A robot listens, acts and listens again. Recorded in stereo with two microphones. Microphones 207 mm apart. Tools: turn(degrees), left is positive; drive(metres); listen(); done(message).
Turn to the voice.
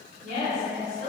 turn(degrees=-65)
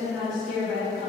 done("Found it: a woman speaking, straight ahead.")